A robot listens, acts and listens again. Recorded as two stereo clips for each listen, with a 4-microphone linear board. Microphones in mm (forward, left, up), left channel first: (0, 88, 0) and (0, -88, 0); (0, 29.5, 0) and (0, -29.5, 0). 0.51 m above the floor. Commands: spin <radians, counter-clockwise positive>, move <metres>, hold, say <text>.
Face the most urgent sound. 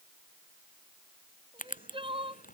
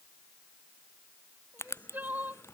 spin -0.52
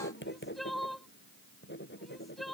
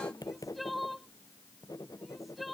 say Facing the crying.